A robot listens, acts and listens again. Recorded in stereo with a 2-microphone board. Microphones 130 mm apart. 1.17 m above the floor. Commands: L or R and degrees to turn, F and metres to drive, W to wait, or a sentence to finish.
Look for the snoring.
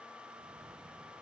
W
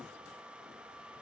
W
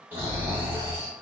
R15
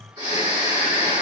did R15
R150
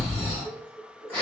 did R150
L15
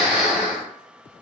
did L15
Found it: snoring, straight ahead, 1 to 2 m away.